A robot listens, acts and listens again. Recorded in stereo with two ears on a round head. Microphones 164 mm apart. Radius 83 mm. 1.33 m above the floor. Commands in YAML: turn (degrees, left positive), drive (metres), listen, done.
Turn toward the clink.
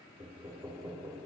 listen: true
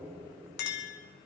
turn: 65
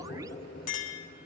turn: 45
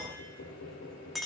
done: "Found it: a clink, straight ahead, 1 to 2 m away."